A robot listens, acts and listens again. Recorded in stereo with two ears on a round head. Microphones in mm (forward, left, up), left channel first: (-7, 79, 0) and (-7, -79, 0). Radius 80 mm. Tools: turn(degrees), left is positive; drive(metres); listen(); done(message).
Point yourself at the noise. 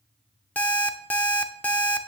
turn(degrees=30)
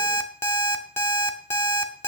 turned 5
turn(degrees=30)
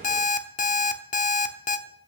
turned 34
turn(degrees=130)
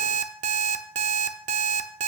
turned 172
turn(degrees=-40)
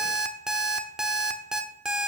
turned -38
done("Facing the alarm clock, under 1 m away.")